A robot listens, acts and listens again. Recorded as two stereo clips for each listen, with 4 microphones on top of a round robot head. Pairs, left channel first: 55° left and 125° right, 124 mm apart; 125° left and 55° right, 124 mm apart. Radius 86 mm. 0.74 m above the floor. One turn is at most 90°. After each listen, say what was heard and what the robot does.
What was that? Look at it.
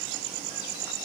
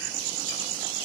Keep listening.
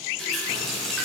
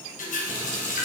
The running tap: 140° left. Turn 90° left.
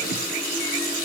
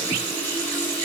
The running tap is now 50° left. Turn 50° left.
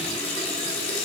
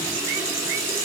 The running tap is now 15° left. Turn 15° left.
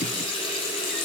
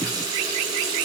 Found it: a running tap, straight ahead.